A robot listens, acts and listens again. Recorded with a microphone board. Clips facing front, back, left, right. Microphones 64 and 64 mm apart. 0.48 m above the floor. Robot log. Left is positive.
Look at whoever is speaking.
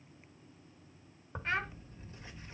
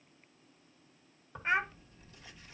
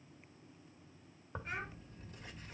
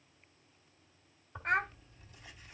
note: The child speaking: 110° right.
cmd yaw -110
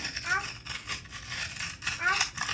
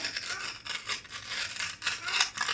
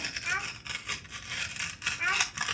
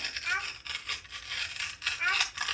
end: Facing the child speaking.